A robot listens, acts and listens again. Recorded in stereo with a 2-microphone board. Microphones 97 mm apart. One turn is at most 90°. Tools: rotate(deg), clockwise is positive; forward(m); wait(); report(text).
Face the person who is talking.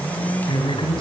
rotate(-60)
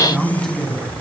report("Facing the woman speaking.")